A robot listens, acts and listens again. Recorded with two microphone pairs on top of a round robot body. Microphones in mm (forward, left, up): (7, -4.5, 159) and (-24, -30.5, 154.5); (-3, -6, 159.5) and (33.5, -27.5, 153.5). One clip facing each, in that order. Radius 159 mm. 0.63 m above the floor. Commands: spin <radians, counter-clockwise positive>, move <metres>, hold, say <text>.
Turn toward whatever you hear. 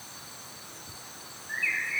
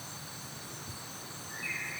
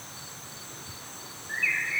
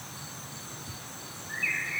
spin 1.31
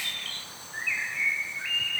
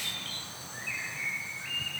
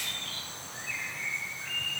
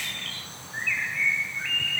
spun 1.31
spin -0.26
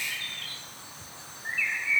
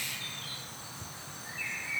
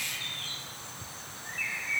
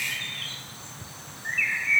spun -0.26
say Found it: a bird, straight ahead.